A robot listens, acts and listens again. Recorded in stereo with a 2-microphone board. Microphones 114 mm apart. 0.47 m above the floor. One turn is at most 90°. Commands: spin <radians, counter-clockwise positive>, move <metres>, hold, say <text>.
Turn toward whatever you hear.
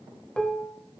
spin 0.52
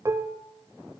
spin -0.44
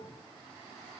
hold
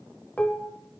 spin 0.26
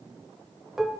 say Found it: dishes clattering, straight ahead, 1 to 2 m away.